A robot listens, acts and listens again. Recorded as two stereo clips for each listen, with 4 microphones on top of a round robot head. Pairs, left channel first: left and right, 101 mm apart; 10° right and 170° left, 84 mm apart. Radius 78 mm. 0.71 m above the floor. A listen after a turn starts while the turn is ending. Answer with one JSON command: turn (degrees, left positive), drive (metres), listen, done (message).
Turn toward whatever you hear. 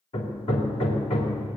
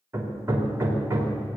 {"turn": 115}
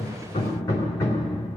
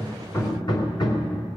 {"turn": 25}
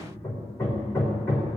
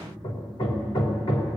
{"turn": 20}
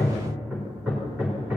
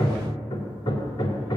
{"turn": -10}
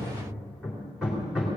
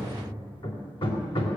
{"done": "Facing the hammering."}